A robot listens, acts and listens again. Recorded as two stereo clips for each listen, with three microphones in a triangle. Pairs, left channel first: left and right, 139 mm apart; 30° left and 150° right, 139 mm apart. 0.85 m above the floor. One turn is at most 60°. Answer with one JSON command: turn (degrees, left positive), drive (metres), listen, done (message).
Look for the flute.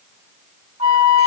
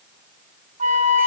{"turn": -60}
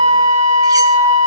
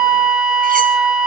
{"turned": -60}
{"turn": -60}
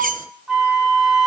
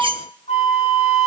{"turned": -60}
{"done": "Facing the flute, 1 to 2 m away."}